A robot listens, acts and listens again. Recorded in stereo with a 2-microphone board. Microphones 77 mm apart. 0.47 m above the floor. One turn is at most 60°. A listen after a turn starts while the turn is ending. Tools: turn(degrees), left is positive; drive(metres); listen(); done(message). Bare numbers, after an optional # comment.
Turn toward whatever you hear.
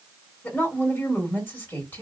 # The woman speaking: about 25° left or 155° left.
turn(25)
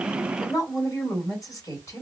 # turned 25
# So it is at 125° left.
turn(60)
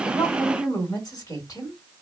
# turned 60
# The woman speaking is now 60° left.
turn(60)
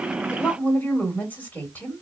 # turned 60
# The woman speaking is now 25° left.
turn(25)
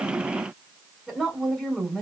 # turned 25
done("Found it: a woman speaking, straight ahead.")